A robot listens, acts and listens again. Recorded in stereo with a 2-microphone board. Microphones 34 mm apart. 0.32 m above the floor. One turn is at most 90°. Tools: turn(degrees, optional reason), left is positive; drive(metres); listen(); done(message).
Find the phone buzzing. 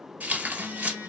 turn(degrees=-90)
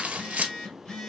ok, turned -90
turn(degrees=10, reason="So it is at 10° left.")
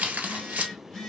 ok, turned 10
done("Facing the phone buzzing, 1 to 2 m away.")